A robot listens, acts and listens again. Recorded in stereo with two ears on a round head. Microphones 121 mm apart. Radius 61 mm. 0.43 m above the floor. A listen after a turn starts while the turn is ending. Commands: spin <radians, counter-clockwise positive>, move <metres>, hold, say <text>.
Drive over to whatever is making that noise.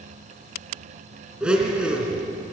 spin -0.52
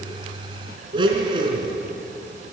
spin -2.53
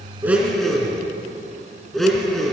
move 1.0
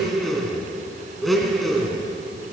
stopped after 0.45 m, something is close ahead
say Blocked. The blender is further on, straight ahead.